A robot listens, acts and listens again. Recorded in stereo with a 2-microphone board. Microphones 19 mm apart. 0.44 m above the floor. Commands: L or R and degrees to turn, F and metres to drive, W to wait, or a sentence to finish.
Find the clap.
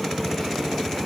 W
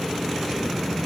W
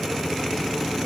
I can't make out a clap to turn to.